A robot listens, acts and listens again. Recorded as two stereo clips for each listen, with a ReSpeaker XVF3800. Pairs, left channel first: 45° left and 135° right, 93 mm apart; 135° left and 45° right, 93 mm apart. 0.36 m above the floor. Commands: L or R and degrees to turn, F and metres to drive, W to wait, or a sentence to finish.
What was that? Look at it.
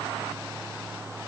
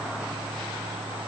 W
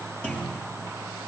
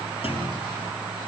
L120
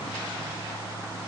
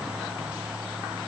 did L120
I heard a clunk from this way, but can't make it out now.